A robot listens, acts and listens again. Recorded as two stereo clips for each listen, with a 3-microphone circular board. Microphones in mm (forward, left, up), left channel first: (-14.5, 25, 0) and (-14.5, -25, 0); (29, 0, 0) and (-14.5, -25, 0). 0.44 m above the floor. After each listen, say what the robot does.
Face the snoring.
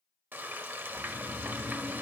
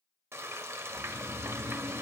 Turn 100° right.
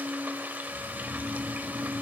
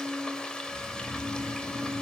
Found it: snoring, straight ahead.